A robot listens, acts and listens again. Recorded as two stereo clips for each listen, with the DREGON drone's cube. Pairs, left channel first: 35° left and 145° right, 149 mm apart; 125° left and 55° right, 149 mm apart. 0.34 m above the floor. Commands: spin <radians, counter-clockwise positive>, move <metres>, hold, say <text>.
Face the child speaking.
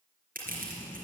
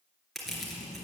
spin 1.92
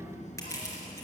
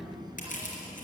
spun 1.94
say Facing the child speaking, 2 to 4 m away.